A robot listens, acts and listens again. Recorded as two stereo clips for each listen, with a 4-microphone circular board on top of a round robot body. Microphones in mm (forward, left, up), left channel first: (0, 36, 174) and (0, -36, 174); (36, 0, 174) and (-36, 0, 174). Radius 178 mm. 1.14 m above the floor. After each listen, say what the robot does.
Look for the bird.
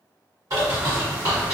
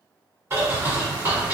Turn 125° right.
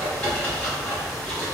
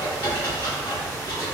Turn 20° left.
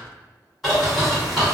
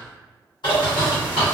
Facing the bird, 1 to 2 m away.